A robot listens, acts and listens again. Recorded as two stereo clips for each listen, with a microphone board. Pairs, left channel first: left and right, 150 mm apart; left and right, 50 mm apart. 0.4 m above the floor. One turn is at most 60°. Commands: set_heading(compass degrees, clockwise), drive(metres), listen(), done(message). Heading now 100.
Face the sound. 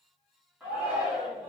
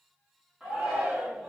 set_heading(130)
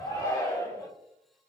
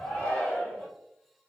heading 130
set_heading(105)
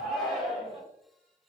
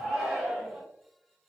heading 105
done("Facing the shout, 1 to 2 m away.")